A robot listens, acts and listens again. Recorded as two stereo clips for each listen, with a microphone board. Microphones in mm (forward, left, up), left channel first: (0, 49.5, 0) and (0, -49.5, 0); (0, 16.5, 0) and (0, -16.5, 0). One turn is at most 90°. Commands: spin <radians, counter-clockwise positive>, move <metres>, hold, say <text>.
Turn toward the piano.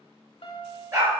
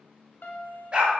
spin 1.22
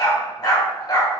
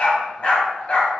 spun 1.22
hold
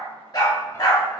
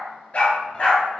hold
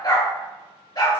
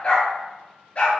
say I heard a piano, but can't make it out now. It was about straight ahead or 40° left.